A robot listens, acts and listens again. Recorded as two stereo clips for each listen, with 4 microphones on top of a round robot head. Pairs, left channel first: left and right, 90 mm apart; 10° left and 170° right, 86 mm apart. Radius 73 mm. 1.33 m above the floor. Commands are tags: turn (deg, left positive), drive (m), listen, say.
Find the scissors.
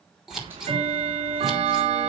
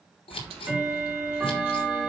<say>Found it: scissors, straight ahead, over 4 m away.</say>